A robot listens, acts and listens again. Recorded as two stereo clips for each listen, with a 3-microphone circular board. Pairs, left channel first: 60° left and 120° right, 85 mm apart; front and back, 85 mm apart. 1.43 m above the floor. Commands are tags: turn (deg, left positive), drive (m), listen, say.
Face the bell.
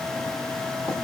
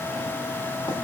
<listen/>
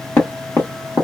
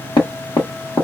<listen/>
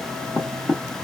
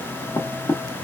<say>I can't make out a bell to turn to.</say>